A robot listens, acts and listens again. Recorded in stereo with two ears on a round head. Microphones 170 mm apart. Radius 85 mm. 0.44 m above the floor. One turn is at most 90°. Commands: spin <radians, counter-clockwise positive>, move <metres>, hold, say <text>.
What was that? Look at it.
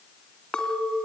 spin 0.52
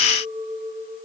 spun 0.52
spin -0.52
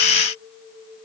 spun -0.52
say Facing the clink.